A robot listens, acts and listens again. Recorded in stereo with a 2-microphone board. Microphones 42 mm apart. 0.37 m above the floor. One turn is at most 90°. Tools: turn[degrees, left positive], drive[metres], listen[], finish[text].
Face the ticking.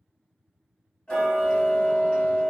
Thought: The ticking: about 25° left or 155° left.
Action: turn[25]
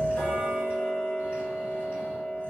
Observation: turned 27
Thought: So it is at 125° left.
Action: turn[90]
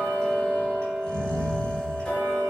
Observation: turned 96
Thought: The ticking is now 30° left.
Action: turn[30]
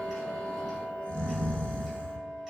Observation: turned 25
Action: finish[Facing the ticking.]